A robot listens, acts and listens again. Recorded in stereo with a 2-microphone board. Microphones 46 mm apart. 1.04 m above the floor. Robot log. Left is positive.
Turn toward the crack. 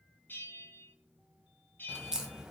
note: The crack: about 15° right or 165° right.
cmd yaw -15
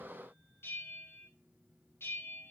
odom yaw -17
cmd idle
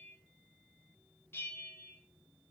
end: I heard a crack, but can't make it out now. It was about straight ahead or 150° right.